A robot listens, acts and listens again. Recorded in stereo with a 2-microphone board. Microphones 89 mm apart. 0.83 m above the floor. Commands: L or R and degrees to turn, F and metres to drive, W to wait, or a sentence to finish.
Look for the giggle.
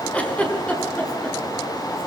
L15
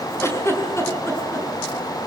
L150
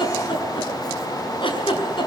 L65
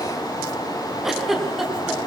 Facing the giggle.